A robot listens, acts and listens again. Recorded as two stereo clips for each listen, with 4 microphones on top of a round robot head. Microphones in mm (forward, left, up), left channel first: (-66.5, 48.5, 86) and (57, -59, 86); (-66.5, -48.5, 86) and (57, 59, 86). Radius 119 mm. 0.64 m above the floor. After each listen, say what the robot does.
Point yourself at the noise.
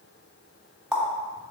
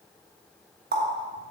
Turn 45° left.
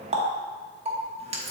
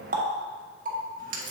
Turn 10° left.
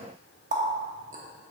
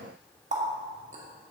Facing the running tap.